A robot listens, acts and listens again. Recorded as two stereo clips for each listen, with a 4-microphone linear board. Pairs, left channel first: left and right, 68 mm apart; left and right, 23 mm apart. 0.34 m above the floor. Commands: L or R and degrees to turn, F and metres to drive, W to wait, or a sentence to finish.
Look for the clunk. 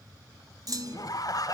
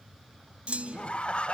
R55
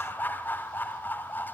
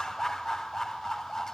W
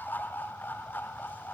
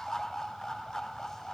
I heard a clunk, but can't make it out now. It was about straight ahead or 70° right.